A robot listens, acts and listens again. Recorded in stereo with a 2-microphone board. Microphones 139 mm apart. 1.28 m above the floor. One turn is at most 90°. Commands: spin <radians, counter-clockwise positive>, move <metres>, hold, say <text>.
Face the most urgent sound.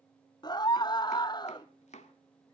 spin 0.52
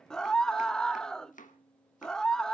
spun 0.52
say Facing the scream.